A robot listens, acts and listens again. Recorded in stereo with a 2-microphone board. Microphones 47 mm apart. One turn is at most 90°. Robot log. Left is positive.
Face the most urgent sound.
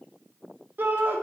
note: The shout: about 45° right or 135° right.
cmd yaw -45
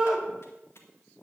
end: Facing the shout, 1 to 2 m away.